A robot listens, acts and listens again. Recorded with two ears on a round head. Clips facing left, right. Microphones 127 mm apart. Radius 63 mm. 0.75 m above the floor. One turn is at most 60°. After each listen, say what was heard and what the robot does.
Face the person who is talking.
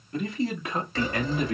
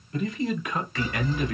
The man speaking: about 30° left or 150° left. Turn 30° left.
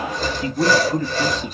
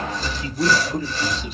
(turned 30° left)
The man speaking: about 45° left or 135° left. Turn 45° left.
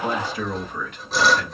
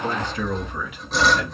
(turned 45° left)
So it is at 15° right. Turn 15° right.
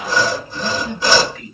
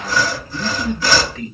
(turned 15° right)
The man speaking is now 30° right. Turn 30° right.
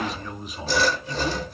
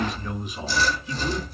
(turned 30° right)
Found it: a man speaking, straight ahead, 1 to 2 m away.